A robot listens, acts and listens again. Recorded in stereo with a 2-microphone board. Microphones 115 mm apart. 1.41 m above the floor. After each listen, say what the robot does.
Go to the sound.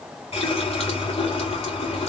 Turn 60° left.
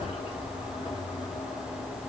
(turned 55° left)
Turn 65° left.
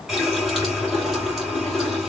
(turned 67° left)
Drive 1.0 m forward.
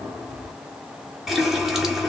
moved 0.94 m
Drive 1.0 m forward.
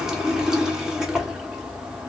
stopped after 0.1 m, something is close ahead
I am next to the running tap.